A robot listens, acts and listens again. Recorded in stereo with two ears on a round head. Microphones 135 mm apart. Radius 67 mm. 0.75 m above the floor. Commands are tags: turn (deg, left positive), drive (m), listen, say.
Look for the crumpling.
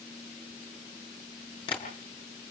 <listen/>
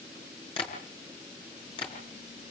<listen/>
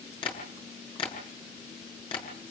<say>I can't make out crumpling to turn to.</say>